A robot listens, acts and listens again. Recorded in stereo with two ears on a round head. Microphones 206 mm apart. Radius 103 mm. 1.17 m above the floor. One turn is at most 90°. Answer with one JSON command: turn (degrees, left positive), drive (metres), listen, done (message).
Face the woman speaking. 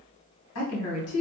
{"turn": 70}
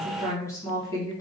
{"turn": 15}
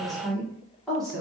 {"done": "Facing the woman speaking, 1 to 2 m away."}